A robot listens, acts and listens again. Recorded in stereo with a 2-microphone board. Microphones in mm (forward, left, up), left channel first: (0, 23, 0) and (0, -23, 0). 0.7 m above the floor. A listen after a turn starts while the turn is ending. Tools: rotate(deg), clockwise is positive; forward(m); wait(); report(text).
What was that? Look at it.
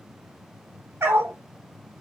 rotate(65)
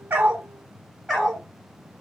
report("Found it: a dog barking, straight ahead.")